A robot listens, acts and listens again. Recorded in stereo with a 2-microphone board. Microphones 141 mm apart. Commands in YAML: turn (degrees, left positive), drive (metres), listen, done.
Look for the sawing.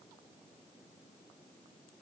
listen: true
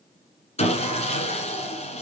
turn: 50
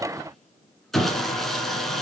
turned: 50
done: "Found it: sawing, straight ahead, 1 to 2 m away."